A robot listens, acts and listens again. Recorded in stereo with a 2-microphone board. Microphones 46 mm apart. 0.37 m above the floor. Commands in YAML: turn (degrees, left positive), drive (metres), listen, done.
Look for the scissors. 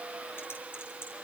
listen: true
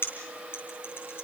listen: true
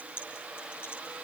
done: "I can't make out scissors, only typing on a keyboard."